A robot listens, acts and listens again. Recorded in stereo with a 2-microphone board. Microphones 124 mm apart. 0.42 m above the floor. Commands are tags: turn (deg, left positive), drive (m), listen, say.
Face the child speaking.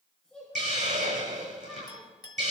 <turn deg="30"/>
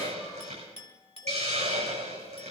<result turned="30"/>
<listen/>
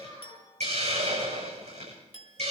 <turn deg="145"/>
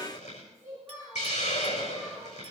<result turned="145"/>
<turn deg="-25"/>
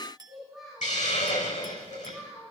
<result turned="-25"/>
<say>Facing the child speaking.</say>